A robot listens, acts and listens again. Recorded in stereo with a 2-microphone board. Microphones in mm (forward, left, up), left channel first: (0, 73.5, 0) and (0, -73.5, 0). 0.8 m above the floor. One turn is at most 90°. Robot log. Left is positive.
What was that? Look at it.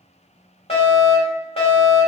note: The fire alarm: about 45° left or 135° left.
cmd yaw +45
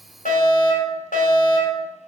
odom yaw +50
note: So it is at 85° left.
cmd yaw +85
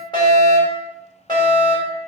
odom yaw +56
note: The fire alarm is now 30° left.
cmd yaw +30
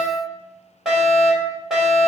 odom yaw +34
end: Found it: a fire alarm, straight ahead, over 4 m away.